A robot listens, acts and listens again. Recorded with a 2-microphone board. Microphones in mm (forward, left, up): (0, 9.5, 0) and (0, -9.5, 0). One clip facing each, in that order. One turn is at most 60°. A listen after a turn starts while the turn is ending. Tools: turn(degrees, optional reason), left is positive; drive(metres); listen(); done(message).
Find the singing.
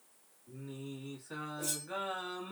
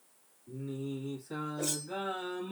turn(degrees=30, reason="The singing: about 30° left or 150° left.")
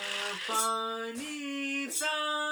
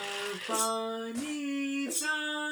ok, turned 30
turn(degrees=60, reason="So it is at 100° left.")
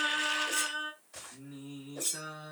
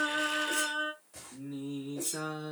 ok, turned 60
done("Facing the singing, 1 to 2 m away.")